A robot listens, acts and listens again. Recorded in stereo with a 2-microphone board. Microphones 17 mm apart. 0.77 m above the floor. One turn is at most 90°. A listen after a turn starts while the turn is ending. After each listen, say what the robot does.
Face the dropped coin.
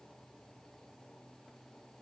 Keep listening.
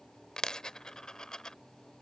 Turn 50° left.
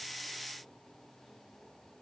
Keep listening.
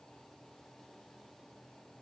I heard a dropped coin, but can't make it out now. It was about straight ahead or 80° left.